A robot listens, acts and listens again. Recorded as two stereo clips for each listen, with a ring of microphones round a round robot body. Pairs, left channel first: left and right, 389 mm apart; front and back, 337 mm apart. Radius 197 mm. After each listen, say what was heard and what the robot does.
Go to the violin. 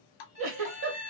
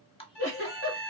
The violin: 15° right. Turn 15° right.
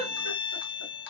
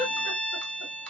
Drive 1.0 m forward.
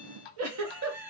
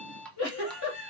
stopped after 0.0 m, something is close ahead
Keep listening.
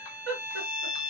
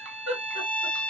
Something is in my way. I am facing the violin but have not reached it.